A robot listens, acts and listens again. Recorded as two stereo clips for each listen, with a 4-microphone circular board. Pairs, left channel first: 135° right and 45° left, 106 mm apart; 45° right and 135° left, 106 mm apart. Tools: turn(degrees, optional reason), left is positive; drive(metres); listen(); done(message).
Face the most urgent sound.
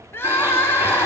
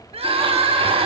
turn(degrees=160, reason="The crying: 160° left.")
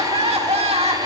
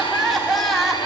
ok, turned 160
turn(degrees=45, reason="The crying is now 45° left.")
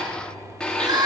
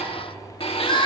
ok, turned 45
done("Facing the crying.")